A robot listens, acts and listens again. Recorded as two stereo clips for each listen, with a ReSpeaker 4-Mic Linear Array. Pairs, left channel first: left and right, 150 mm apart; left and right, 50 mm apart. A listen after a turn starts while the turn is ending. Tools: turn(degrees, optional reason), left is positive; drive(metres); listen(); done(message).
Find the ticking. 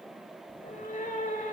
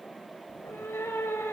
listen()
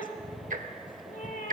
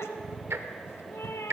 turn(degrees=-60, reason="The ticking: about 60° right or 120° right.")
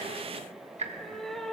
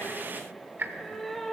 turn(degrees=-50, reason="So it is at 50° right.")
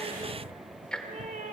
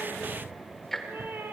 done("Facing the ticking.")